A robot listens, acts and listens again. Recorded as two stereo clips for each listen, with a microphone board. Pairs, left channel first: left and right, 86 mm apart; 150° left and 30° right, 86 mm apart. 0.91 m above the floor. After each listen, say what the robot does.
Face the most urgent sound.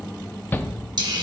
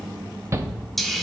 Turn 25° left.
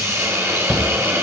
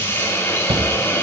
Found it: a shout, straight ahead, under 1 m away.